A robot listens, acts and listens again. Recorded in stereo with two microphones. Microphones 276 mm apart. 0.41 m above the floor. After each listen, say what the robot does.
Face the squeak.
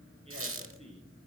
Turn 50° right.
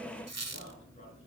Turn 80° right.
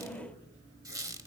Turn 15° right.
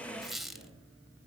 Found it: a squeak, straight ahead.